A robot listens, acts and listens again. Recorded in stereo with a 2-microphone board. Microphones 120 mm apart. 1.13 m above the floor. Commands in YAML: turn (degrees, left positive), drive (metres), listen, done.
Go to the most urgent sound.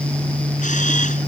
listen: true
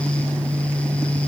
listen: true
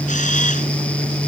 done: "I can't make out anything urgent to turn to."